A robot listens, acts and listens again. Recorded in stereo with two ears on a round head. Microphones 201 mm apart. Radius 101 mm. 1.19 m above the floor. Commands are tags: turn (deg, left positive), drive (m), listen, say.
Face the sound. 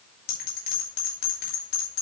<turn deg="45"/>
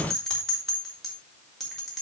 <say>Found it: a bell, straight ahead, 2 to 4 m away.</say>